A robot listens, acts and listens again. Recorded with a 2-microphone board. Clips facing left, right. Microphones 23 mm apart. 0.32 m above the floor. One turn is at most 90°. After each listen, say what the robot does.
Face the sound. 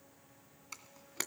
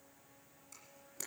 Turn 55° left.
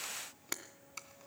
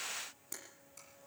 Turn 65° left.
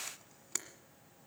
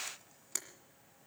Turn 15° left.
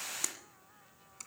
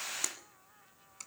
Keep listening.
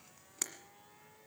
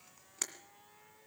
Facing the camera shutter.